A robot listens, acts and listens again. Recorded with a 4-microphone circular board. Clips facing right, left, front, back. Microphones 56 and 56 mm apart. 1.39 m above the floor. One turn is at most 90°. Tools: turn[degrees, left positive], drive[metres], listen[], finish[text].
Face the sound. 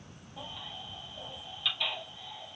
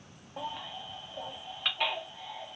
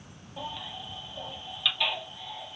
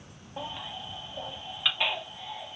Thought: The baby crying: 125° left.
Action: turn[90]
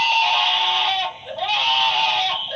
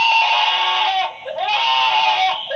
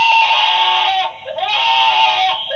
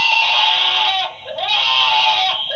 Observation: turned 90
Thought: The baby crying is now 65° left.
Action: turn[65]
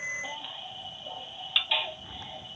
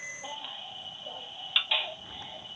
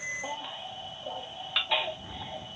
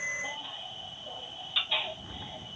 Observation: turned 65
Thought: The baby crying is now 10° left.
Action: turn[10]
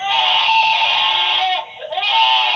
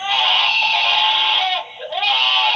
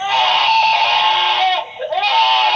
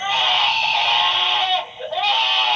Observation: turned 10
Action: finish[Facing the baby crying, under 1 m away.]